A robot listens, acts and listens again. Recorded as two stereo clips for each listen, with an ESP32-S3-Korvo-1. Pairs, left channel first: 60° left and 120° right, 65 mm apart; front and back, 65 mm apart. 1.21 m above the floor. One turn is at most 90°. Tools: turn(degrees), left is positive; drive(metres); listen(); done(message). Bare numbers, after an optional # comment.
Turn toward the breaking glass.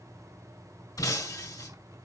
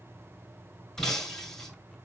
# The breaking glass: 80° left.
turn(80)
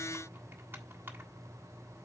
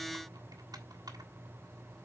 done("Facing where the breaking glass came from. I can't hear it now.")